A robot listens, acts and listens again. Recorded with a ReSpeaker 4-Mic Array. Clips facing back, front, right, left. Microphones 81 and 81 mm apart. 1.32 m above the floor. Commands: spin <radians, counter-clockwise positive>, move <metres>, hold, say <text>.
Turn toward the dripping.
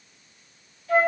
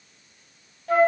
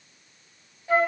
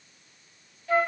hold
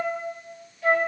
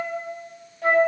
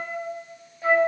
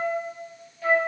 hold
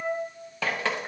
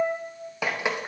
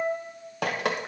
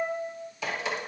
spin -1.31
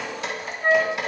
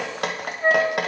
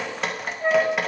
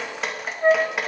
say Facing the dripping, under 1 m away.